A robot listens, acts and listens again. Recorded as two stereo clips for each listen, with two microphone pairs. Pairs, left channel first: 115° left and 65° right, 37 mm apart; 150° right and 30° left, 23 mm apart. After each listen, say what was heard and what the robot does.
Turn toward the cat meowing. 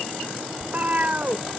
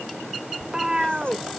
The cat meowing: 25° right. Turn 25° right.
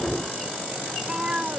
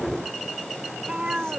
Facing the cat meowing.